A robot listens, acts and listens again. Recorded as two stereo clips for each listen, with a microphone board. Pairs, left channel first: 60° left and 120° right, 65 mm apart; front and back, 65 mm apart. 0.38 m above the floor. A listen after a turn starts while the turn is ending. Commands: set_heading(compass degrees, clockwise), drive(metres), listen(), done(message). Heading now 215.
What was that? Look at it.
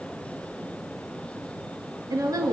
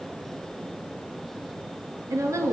set_heading(0)
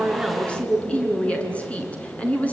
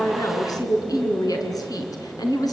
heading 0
done("Facing the woman speaking, over 4 m away.")